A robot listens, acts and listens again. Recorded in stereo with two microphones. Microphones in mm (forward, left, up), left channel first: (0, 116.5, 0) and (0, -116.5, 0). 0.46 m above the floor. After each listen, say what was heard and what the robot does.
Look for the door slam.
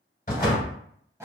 The door slam: about 35° left or 145° left. Turn 35° left.
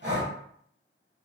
Keep listening.
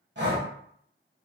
I heard a door slam, but can't make it out now. It was about straight ahead or 110° left.